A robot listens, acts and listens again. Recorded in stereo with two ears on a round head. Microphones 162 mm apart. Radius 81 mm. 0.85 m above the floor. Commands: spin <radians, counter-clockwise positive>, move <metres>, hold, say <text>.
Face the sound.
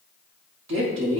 spin -1.22
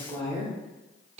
spin -0.70
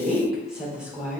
say Facing the woman speaking.